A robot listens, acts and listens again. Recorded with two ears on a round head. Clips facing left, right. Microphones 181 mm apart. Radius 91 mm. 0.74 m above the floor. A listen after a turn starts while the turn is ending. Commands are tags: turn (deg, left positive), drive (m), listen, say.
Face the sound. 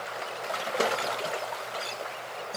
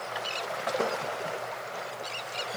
<listen/>
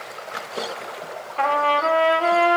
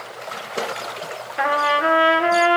<turn deg="-30"/>
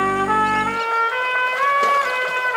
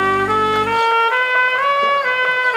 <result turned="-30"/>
<turn deg="-135"/>
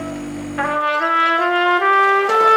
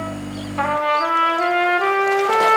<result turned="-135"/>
<turn deg="15"/>
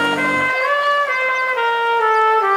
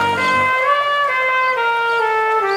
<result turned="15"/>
<say>Facing the trumpet.</say>